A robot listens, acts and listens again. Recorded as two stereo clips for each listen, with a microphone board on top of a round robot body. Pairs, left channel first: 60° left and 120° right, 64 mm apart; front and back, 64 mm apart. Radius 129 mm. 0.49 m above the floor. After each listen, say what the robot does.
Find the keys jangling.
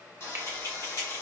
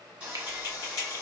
Turn 25° left.
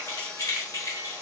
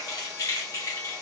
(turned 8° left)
Turn 30° left.
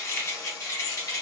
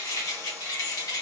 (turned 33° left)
Turn 30° left.
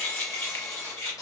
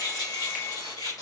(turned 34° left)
Turn 10° left.
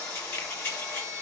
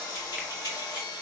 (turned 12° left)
Turn 10° left.
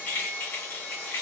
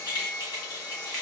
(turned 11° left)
Facing the keys jangling.